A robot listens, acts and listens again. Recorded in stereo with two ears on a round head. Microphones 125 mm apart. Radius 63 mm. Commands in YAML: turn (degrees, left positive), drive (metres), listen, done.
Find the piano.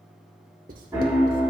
turn: -20
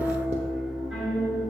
done: "Facing the piano, 2 to 4 m away."